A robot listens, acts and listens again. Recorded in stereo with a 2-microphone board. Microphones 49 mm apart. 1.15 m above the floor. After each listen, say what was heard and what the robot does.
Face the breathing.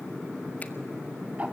Keep listening.
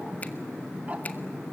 Keep listening.
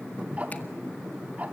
I can't make out breathing, only ticking.